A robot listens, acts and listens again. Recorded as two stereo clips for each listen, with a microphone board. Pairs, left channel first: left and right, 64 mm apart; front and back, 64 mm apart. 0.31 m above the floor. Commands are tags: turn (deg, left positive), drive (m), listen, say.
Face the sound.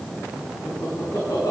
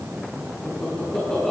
<turn deg="80"/>
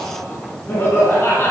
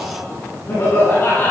<turn deg="45"/>
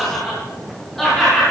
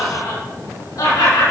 <say>Found it: laughter, straight ahead.</say>